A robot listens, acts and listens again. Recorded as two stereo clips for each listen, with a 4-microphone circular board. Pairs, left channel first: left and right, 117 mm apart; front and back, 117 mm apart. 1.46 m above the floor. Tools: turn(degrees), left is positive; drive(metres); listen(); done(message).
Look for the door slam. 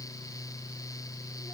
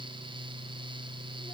listen()
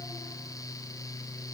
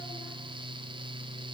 listen()
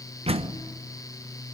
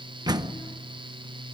turn(degrees=-125)
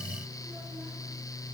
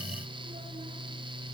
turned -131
done("I heard a door slam from this way, but can't make it out now.")